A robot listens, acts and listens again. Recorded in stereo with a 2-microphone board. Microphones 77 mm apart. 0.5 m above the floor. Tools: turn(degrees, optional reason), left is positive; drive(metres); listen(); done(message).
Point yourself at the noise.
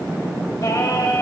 turn(degrees=40, reason="The singing: about 40° left or 140° left.")
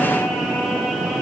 listen()
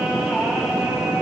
turn(degrees=-10, reason="So it is at 10° right.")
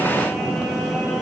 listen()
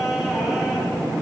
listen()
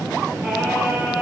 done("I heard singing from this way, but can't make it out now.")